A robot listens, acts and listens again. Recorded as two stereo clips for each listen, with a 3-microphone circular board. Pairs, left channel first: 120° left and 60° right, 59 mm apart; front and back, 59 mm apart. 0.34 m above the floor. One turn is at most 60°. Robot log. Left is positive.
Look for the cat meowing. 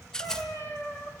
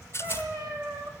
note: The cat meowing: 155° left.
cmd yaw +60
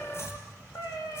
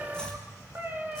note: The cat meowing is now 115° left.
cmd yaw +60
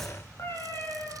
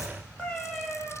note: The cat meowing is now 75° left.
cmd yaw +60
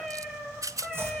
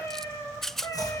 note: The cat meowing is now 30° left.
cmd yaw +30
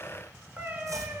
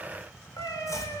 end: Facing the cat meowing.